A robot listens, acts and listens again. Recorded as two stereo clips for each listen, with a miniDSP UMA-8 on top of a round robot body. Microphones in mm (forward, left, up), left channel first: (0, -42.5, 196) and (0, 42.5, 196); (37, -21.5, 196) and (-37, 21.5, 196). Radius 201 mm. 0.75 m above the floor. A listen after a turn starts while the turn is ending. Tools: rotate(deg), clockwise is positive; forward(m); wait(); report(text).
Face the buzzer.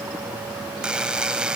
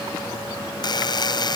rotate(-10)
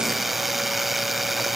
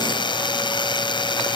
report("Facing the buzzer.")